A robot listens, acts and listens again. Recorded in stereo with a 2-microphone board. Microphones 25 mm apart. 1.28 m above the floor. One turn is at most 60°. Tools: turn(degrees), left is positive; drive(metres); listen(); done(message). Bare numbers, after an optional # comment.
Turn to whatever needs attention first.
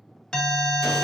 # The alarm: about 35° left or 145° left.
turn(35)
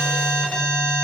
# So it is at 110° left.
turn(60)
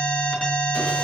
# The alarm is now 45° left.
turn(45)
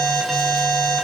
done("Found it: an alarm, straight ahead.")